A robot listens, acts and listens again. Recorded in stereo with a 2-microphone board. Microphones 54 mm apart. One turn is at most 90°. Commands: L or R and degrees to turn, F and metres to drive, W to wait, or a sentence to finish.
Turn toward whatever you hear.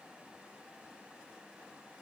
W
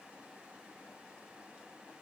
W
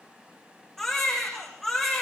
L30
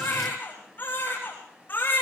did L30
L90
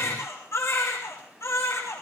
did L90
L60
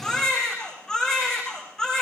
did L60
L10
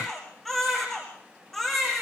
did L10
Found it: a baby crying, straight ahead.